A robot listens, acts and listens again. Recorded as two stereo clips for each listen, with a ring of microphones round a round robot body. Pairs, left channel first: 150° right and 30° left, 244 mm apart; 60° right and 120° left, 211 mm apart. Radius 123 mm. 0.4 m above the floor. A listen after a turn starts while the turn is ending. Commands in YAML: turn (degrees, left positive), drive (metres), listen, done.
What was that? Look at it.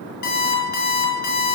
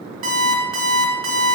turn: 160
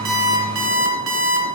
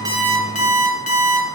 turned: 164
done: "Found it: an alarm clock, straight ahead."